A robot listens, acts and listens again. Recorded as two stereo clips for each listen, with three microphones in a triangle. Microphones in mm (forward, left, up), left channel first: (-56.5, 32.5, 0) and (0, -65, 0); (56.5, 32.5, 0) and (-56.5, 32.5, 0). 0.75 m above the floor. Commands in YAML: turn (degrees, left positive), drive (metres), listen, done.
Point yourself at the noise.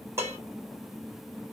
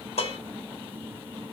done: "Facing the dishes clattering, 1 to 2 m away."